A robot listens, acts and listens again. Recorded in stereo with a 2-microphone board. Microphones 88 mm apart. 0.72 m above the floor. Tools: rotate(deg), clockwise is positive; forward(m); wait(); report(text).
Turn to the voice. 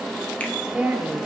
rotate(30)
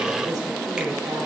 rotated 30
wait()
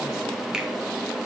wait()
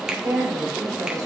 rotate(135)
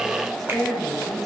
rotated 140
report("Facing the woman speaking, 2 to 4 m away.")